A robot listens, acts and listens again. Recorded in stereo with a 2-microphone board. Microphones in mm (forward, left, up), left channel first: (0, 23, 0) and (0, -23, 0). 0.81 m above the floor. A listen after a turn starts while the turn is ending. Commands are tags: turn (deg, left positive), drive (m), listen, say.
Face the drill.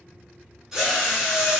<turn deg="-30"/>
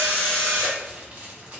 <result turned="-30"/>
<turn deg="20"/>
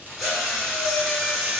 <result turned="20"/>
<say>Found it: a drill, straight ahead.</say>